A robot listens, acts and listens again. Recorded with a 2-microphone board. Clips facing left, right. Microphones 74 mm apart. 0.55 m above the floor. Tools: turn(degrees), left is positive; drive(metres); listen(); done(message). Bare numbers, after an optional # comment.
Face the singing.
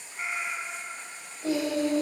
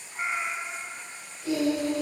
# The singing: about 45° left or 135° left.
turn(45)
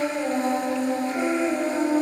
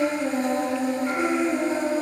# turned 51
# So it is at 80° left.
turn(80)
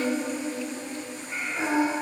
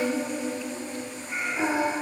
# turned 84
done("Found it: singing, straight ahead, 2 to 4 m away.")